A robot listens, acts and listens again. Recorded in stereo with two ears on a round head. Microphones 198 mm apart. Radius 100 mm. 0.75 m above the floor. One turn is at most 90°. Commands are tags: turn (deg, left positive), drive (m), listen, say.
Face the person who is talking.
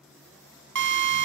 <listen/>
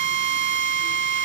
<listen/>
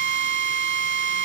<say>I can't make out anyone speaking, only a drill.</say>